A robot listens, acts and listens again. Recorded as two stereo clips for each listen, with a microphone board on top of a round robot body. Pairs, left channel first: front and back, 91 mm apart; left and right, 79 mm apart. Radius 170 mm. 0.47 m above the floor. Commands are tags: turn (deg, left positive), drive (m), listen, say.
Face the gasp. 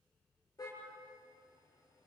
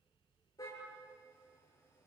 <listen/>
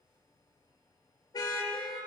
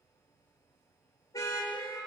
<listen/>
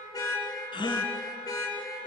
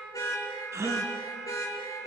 <turn deg="-35"/>
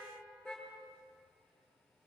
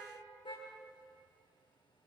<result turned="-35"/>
<say>Facing where the gasp came from. I can't hear it now.</say>